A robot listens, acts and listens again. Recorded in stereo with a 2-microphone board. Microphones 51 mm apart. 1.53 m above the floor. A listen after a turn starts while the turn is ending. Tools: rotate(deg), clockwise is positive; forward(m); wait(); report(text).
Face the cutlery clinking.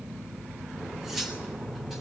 rotate(30)
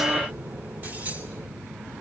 wait()
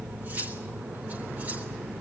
rotate(135)
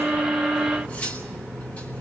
rotate(-35)
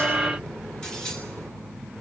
rotate(-20)
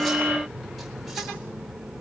wait()
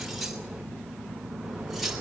report("Found it: cutlery clinking, straight ahead, 2 to 4 m away.")